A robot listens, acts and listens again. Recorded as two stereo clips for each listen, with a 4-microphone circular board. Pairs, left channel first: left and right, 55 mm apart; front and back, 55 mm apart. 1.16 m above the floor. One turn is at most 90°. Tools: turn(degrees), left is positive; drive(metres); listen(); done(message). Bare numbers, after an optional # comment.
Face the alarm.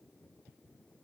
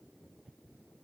listen()
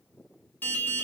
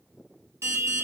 # The alarm: 145° left.
turn(90)
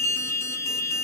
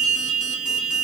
# The alarm is now 95° left.
turn(90)
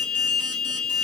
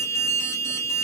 # The alarm is now 20° left.
turn(20)
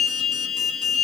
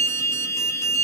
# The alarm is now 10° left.
turn(10)
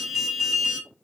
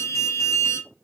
done("Facing the alarm.")